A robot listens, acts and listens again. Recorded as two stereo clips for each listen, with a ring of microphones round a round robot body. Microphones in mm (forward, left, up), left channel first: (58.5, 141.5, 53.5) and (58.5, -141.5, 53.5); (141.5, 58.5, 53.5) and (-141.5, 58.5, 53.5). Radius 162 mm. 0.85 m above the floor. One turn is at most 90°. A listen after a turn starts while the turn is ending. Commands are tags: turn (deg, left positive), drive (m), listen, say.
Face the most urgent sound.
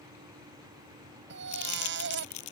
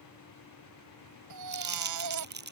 <turn deg="-90"/>
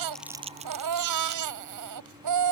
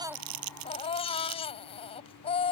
<turn deg="-75"/>
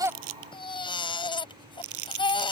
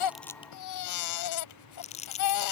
<turn deg="15"/>
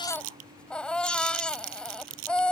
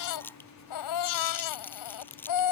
<say>Found it: a baby crying, straight ahead.</say>